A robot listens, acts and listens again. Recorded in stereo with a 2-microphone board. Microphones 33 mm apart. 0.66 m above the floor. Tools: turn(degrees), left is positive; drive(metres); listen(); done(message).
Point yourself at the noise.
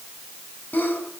turn(degrees=70)
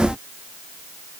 listen()
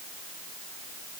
done("I heard a sneeze, but can't make it out now. It was about straight ahead or 40° left.")